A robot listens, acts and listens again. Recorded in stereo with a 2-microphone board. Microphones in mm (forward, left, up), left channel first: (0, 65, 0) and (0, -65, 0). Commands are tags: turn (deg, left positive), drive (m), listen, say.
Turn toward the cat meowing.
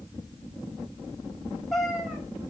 <turn deg="30"/>
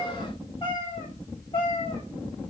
<turn deg="140"/>
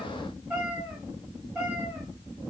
<turn deg="-10"/>
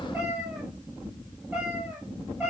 <say>Facing the cat meowing.</say>